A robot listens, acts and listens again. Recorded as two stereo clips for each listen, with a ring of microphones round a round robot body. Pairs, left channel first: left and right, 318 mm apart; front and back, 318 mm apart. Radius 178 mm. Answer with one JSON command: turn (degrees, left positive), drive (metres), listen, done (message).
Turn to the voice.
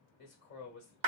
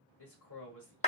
{"turn": 35}
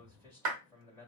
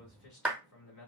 {"turn": 10}
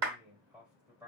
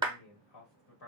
{"done": "Facing the man speaking, 1 to 2 m away."}